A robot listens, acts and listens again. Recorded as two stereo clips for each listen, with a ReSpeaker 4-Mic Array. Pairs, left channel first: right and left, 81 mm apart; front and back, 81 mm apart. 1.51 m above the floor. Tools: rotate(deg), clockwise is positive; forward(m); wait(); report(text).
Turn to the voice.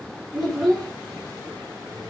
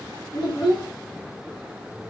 report("Facing the child speaking.")